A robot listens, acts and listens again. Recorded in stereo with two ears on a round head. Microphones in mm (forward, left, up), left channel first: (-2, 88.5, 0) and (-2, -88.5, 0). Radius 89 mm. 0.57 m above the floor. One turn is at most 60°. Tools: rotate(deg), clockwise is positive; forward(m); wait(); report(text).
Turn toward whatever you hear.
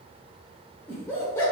rotate(-15)
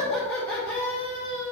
rotate(-30)
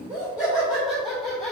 rotate(-30)
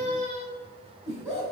rotate(10)
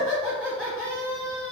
report("Found it: laughter, straight ahead.")